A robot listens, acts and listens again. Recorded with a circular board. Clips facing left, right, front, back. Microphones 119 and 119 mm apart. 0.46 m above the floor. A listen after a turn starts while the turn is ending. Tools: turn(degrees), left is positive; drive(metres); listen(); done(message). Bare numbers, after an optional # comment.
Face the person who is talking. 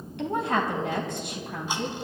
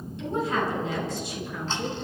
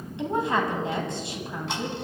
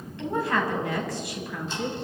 # The woman speaking: 60° left.
turn(60)
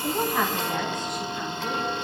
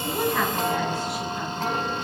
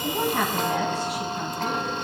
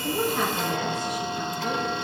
listen()
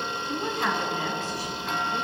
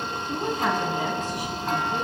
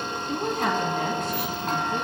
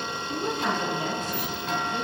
# The woman speaking is now 15° right.
turn(-15)
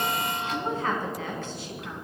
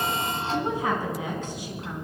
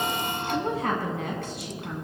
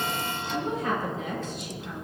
# The woman speaking is now 15° right.
turn(-15)
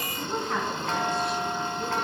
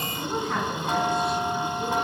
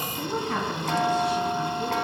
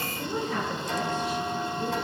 done("Facing the woman speaking.")